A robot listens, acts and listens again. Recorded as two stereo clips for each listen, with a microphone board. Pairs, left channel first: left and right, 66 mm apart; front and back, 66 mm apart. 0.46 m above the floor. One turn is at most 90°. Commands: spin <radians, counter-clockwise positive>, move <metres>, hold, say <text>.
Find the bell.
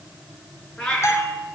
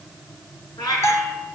spin 0.79
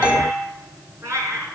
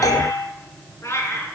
spin -0.26
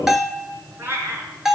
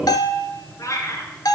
say Found it: a bell, straight ahead.